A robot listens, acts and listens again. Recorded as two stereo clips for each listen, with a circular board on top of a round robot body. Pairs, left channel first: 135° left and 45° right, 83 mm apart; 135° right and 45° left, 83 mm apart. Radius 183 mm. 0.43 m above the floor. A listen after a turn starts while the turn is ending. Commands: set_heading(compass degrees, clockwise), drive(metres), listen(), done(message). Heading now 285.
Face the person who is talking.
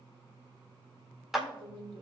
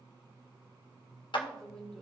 set_heading(340)
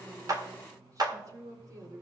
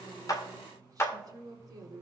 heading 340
done("Facing the woman speaking, 1 to 2 m away.")